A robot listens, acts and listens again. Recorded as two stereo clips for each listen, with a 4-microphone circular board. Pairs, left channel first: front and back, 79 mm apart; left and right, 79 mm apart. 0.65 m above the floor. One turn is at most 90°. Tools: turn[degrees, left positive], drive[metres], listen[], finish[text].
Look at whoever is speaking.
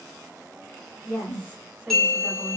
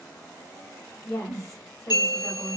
Thought: The woman speaking: 130° left.
Action: turn[90]
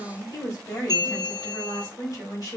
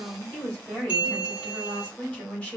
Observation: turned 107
Thought: The woman speaking is now 20° left.
Action: turn[20]
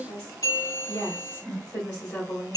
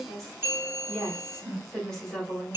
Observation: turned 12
Thought: The woman speaking is now 10° left.
Action: turn[10]
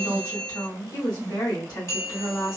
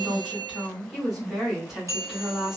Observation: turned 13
Action: finish[Facing the woman speaking.]